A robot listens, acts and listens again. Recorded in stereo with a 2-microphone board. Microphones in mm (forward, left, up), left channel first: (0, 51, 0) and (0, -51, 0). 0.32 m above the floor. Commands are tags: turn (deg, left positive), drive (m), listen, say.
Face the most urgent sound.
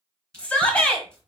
<turn deg="30"/>
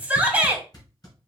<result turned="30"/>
<turn deg="-15"/>
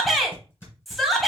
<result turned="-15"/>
<say>Facing the shout.</say>